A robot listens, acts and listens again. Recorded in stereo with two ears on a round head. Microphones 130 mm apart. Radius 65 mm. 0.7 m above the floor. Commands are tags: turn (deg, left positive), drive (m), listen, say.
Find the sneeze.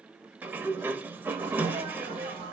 <turn deg="-45"/>
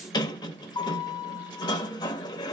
<listen/>
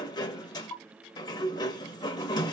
<say>I heard a sneeze, but can't make it out now. It was about straight ahead or 90° right.</say>